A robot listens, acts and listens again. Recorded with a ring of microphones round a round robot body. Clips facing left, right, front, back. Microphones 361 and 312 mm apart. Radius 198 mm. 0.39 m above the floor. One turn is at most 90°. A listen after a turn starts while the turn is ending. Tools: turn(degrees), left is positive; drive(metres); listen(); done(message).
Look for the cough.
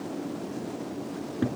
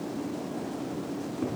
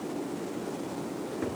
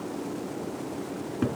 listen()
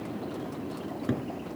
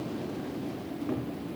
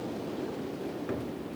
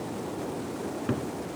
listen()
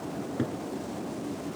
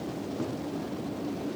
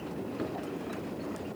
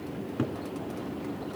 done("I can't make out a cough, only a cupboard door.")